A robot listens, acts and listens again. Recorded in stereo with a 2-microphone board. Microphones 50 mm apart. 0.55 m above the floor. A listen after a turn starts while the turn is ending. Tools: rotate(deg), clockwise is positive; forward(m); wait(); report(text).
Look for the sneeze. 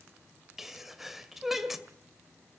rotate(30)
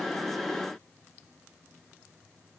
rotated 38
wait()
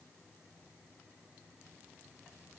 report("I heard a sneeze, but can't make it out now. It was about 35° left or 135° right.")